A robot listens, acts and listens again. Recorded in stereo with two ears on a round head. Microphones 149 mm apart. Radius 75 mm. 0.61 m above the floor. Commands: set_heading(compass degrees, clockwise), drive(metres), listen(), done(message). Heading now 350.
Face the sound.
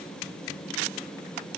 listen()
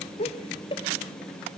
set_heading(320)
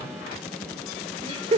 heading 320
set_heading(355)
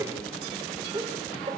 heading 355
set_heading(25)
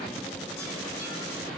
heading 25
listen()
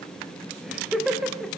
done("Facing the laughter.")